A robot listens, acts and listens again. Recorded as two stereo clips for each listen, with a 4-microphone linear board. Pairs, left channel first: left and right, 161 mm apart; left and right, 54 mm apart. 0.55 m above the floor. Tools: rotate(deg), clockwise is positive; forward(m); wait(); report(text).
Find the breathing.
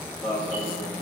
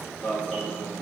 wait()
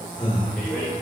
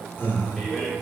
rotate(-35)
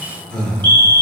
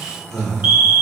report("Facing the breathing, under 1 m away.")